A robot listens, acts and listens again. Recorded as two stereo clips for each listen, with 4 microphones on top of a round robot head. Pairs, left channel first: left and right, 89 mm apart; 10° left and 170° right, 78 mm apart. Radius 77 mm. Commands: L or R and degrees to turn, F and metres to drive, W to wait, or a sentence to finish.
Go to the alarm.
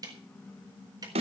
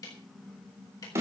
W
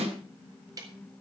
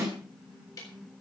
W
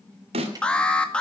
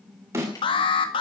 L10
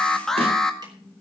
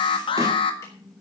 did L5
F1.0
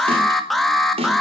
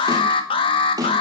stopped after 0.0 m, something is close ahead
Something is in my way. I am facing the alarm but have not reached it.